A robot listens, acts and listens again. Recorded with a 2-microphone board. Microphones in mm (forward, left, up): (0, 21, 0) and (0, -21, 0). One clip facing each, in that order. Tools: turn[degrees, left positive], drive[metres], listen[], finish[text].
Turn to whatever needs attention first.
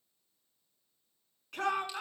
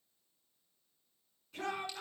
Action: turn[90]
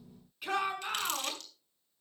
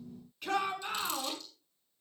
Action: finish[Facing the shout, over 4 m away.]